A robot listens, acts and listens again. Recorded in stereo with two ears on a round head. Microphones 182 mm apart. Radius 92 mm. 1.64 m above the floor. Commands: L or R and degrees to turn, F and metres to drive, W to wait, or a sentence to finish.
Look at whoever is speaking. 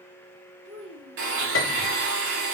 R55
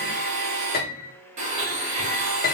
W
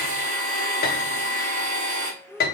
Facing the child speaking, 1 to 2 m away.